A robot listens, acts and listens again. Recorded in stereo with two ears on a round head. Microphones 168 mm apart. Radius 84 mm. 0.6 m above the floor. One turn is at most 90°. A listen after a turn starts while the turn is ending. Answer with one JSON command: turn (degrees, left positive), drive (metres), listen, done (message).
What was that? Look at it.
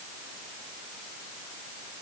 {"listen": true}
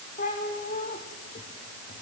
{"turn": 45}
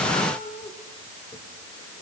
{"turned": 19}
{"turn": 25}
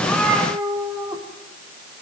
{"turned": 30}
{"turn": -10}
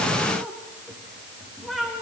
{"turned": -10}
{"done": "Facing the cat meowing, over 4 m away."}